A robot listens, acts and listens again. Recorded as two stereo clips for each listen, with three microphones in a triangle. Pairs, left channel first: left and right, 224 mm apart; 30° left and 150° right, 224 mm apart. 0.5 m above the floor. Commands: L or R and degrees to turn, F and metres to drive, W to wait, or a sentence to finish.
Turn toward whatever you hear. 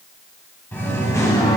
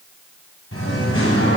L20
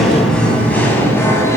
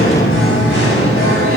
L15
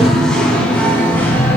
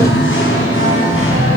L10
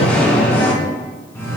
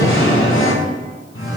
L10
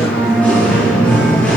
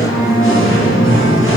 Found it: singing, straight ahead, 2 to 4 m away.